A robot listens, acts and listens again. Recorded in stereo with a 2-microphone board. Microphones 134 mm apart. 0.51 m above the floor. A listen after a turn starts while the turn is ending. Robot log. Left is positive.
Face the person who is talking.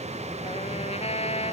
cmd idle
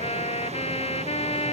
cmd idle
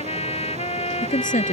cmd yaw +90
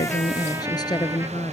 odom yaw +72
note: So it is at 30° left.
cmd yaw +30
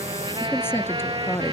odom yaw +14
note: The woman speaking is now 15° left.
cmd yaw +15
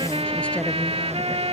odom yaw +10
cmd idle
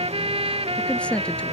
note: The woman speaking is now 10° left.
cmd yaw +10
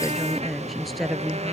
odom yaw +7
end: Found it: a woman speaking, straight ahead.